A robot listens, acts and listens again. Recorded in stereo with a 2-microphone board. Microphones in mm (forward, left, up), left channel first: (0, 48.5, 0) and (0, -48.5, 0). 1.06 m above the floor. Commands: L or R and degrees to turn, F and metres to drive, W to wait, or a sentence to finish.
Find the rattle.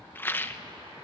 L20
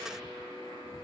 W
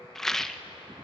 Found it: a rattle, straight ahead.